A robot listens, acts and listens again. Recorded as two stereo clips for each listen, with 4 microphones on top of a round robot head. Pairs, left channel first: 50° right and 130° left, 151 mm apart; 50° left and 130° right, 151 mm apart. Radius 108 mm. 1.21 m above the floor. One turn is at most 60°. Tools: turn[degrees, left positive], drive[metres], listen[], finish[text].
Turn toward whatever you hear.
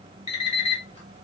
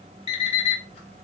Action: finish[Facing the alarm clock, 1 to 2 m away.]